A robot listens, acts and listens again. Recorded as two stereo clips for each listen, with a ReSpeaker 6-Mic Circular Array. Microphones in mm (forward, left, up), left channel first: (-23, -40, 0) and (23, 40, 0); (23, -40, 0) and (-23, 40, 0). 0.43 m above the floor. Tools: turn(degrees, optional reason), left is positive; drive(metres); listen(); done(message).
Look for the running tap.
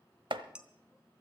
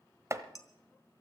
listen()
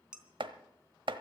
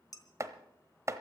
listen()
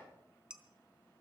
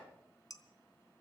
done("I can't make out a running tap to turn to.")